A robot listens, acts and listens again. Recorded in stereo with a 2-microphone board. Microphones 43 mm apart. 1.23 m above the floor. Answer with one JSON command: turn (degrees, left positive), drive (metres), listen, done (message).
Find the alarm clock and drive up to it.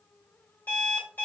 {"turn": 45}
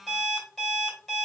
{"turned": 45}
{"drive": 1.0}
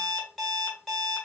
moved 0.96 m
{"drive": 1.0}
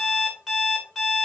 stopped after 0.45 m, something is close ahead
{"done": "I am next to the alarm clock."}